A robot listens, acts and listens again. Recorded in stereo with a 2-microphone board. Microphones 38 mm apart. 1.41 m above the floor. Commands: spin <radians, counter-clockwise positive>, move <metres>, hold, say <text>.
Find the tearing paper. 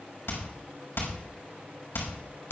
hold
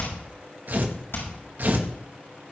spin -0.96
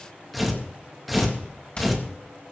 say Facing the tearing paper.